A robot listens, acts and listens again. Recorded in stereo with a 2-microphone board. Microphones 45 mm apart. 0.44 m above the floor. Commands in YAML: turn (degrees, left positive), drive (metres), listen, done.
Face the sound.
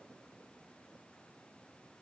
listen: true
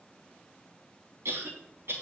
turn: -70
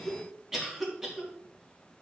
turn: -10
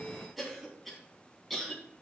done: "Facing the cough."